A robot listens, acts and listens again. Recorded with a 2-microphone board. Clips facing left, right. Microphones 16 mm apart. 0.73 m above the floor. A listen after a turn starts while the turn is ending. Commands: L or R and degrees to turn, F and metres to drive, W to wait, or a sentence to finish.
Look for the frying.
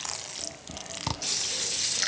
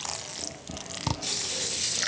W
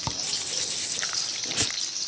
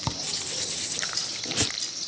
L40
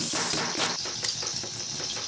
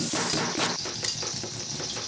Found it: frying, straight ahead, 2 to 4 m away.